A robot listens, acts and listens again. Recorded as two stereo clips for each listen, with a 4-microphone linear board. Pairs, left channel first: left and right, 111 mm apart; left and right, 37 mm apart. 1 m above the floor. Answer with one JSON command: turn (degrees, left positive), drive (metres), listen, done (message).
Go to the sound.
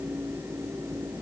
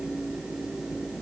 {"listen": true}
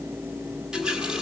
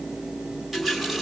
{"turn": -30}
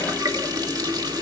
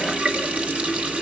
{"turn": -145}
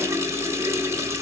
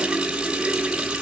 {"turn": -25}
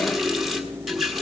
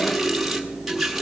{"drive": 1.0}
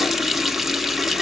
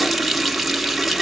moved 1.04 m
{"drive": 1.0}
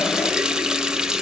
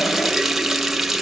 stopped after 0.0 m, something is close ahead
{"done": "Arrived at the running tap, straight ahead."}